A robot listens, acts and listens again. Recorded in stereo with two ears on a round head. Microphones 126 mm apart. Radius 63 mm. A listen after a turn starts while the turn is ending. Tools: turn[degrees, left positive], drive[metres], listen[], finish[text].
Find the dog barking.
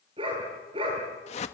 Thought: The dog barking: about 40° right or 140° right.
Action: turn[-40]
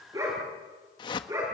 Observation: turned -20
Thought: The dog barking: about 20° right or 160° right.
Action: turn[-20]
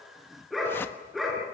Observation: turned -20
Action: finish[Found it: a dog barking, straight ahead.]